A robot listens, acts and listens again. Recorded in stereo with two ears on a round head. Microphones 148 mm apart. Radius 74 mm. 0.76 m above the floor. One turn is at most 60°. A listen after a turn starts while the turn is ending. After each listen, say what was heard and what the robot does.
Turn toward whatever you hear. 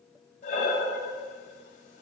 The breathing: about 45° left or 135° left. Turn 45° left.
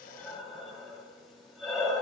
Found it: breathing, straight ahead.